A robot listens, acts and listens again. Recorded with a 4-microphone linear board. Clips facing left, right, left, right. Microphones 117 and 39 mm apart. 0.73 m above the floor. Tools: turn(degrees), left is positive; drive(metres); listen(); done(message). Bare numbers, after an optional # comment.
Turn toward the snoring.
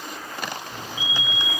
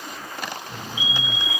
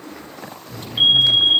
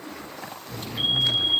# The snoring: about 60° right or 120° right.
turn(-60)
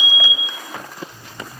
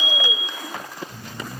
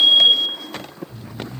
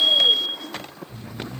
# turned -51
# So it is at 70° right.
turn(-70)
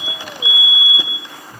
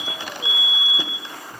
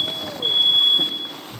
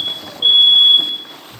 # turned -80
# The snoring is now 10° left.
turn(10)
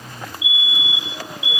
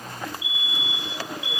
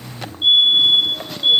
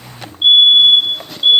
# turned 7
done("Facing the snoring.")